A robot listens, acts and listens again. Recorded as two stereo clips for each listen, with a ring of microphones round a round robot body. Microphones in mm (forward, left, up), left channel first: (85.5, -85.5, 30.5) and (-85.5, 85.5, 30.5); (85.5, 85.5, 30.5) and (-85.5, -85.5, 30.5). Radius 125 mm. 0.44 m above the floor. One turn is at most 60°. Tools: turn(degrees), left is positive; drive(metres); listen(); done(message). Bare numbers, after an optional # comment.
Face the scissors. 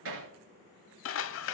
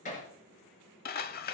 # The scissors: 10° right.
turn(-10)
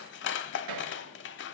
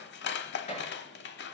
done("Found it: scissors, straight ahead.")